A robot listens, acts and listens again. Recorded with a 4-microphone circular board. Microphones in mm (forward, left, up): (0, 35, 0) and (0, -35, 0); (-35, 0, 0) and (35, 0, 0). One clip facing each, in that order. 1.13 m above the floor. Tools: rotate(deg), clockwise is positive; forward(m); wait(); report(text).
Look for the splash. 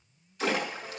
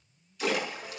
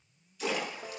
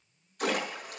rotate(-35)
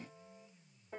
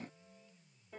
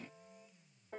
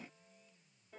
report("Facing where the splash came from. I can't hear it now.")